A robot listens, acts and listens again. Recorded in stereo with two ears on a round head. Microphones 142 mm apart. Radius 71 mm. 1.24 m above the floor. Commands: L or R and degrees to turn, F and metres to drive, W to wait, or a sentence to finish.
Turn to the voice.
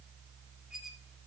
W
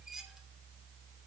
W
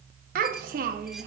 R60
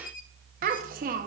R60
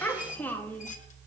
L10
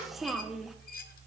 Facing the child speaking, 1 to 2 m away.